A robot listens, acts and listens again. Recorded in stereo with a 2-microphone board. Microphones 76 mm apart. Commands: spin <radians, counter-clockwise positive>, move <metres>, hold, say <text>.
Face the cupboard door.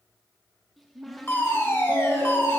spin 0.52
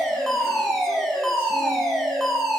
hold
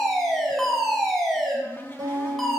spin 2.62
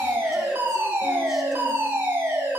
hold
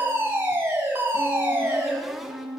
say Facing the cupboard door, 1 to 2 m away.